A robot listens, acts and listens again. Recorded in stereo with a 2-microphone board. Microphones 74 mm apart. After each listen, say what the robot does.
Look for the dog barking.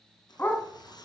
Turn 30° left.
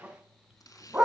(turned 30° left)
Turn 20° right.
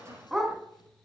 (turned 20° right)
Facing the dog barking, 2 to 4 m away.